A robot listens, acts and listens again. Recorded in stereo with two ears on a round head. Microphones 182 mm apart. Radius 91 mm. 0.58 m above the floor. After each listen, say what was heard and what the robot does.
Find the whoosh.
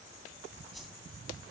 Turn 30° left.
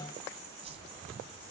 So it is at 30° right. Turn 30° right.
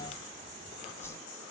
The whoosh is now 15° left. Turn 15° left.
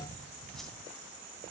Found it: a whoosh, straight ahead, 2 to 4 m away.